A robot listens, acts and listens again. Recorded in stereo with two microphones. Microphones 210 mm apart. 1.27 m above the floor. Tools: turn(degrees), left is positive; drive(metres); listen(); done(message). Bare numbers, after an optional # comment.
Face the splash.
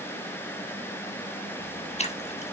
# The splash: about 30° left or 150° left.
turn(30)
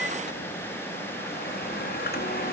listen()
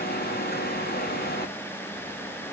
done("I heard a splash, but can't make it out now. It was about straight ahead or 120° left.")